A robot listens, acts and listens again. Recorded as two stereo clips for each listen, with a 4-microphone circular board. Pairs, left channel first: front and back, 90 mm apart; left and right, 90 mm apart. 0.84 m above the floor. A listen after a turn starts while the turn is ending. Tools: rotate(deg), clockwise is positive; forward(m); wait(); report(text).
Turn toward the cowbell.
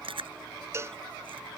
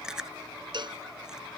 rotate(120)
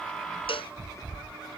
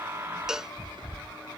report("Found it: a cowbell, straight ahead.")